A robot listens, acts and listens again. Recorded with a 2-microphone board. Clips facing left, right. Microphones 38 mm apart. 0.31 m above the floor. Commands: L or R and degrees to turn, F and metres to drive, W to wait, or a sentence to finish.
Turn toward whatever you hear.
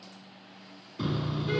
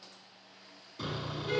L30
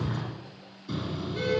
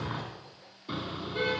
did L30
R25
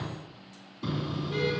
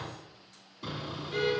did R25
Facing the car horn.